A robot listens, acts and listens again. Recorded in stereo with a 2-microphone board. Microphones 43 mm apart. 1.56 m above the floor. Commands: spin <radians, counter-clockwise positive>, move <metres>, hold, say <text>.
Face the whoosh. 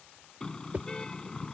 spin -0.61
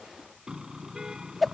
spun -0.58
say Found it: a whoosh, straight ahead.